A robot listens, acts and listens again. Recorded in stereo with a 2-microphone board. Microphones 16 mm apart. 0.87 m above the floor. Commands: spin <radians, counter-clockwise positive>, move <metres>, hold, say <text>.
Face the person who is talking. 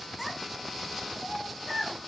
spin -0.52
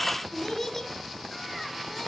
spin 0.35
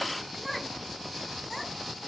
say Found it: a child speaking, straight ahead.